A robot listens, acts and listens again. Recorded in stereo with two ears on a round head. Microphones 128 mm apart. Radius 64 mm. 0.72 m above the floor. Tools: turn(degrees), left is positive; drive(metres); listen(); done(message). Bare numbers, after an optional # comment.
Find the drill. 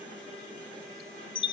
listen()
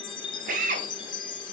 # The drill: about 60° right or 120° right.
turn(-60)
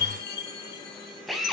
done("Facing the drill.")